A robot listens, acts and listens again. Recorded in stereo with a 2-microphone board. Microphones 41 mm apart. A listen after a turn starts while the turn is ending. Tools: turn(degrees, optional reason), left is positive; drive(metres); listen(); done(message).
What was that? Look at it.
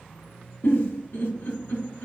turn(degrees=90)
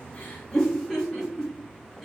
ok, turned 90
done("Facing the giggle, 1 to 2 m away.")